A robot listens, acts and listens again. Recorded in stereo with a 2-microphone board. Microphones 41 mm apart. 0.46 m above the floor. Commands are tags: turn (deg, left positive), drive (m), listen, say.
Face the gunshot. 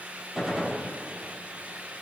<turn deg="-30"/>
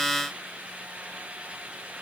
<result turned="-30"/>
<listen/>
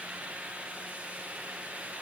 <say>I heard a gunshot, but can't make it out now. It was about 25° left or 145° right.</say>